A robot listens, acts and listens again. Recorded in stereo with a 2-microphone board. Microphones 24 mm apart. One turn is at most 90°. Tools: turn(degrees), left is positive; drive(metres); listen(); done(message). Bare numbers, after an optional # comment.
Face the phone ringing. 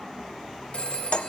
# The phone ringing: about 55° left or 125° left.
turn(55)
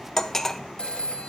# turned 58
# So it is at 60° left.
turn(60)
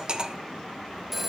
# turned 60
done("Facing the phone ringing.")